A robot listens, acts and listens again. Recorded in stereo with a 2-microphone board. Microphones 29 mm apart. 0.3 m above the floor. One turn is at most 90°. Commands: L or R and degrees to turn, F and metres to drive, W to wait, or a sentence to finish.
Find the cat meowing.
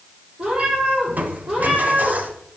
R30
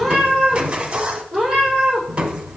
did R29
R10
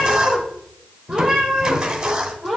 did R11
Found it: a cat meowing, straight ahead.